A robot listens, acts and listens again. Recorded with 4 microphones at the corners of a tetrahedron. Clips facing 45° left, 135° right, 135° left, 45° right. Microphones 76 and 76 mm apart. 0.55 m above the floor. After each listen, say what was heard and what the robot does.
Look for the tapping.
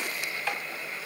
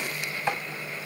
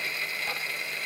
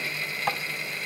The tapping: 70° right. Turn 70° right.
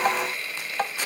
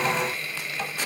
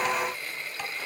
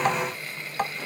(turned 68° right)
Found it: tapping, straight ahead, 1 to 2 m away.